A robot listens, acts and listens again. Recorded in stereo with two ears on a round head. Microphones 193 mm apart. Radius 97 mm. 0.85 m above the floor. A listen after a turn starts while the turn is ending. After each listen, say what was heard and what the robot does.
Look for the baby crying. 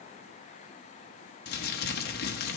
Keep listening.
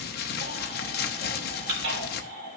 The baby crying: about 50° right or 130° right. Turn 50° right.
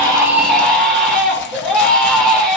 Found it: a baby crying, straight ahead.